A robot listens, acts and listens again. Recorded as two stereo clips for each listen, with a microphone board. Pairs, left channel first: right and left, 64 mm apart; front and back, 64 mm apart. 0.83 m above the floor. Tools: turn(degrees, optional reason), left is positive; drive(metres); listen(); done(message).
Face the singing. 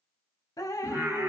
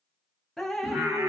turn(degrees=135, reason="The singing: 135° left.")
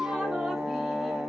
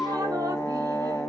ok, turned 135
done("Found it: singing, straight ahead, 1 to 2 m away.")